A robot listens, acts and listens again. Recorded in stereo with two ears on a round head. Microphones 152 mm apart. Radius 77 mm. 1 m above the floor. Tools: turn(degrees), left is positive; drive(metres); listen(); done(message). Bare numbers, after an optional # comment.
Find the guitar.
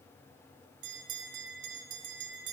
listen()
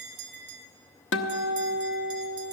turn(90)
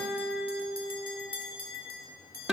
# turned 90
done("Facing the guitar, under 1 m away.")